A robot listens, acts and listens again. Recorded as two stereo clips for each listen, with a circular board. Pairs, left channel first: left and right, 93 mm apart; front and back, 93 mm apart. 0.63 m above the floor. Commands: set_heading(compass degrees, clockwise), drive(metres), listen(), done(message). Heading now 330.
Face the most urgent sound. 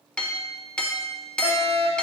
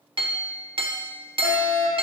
set_heading(300)
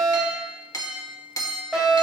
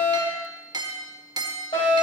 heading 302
done("Facing the fire alarm, over 4 m away.")